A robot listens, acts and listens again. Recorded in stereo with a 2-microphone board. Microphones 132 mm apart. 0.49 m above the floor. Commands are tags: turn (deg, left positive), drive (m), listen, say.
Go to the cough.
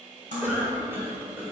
<turn deg="-15"/>
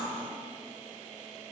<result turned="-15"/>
<listen/>
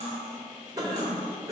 <turn deg="-150"/>
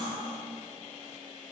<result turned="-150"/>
<listen/>
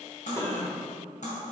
<turn deg="25"/>
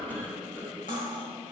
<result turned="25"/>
<turn deg="15"/>
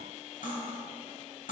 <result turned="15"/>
<listen/>
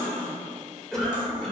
<drive m="1.0"/>
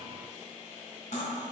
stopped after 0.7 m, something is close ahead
<listen/>
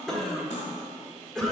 <say>I am next to the cough.</say>